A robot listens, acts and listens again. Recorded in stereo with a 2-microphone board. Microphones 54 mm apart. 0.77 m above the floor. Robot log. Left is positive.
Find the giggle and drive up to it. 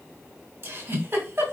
note: The giggle: about 50° right or 130° right.
cmd yaw -50
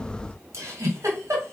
note: So it is at 80° right.
cmd yaw -80
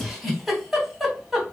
cmd fwd 1.0
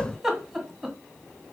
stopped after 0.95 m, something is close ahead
end: Arrived at the giggle, straight ahead.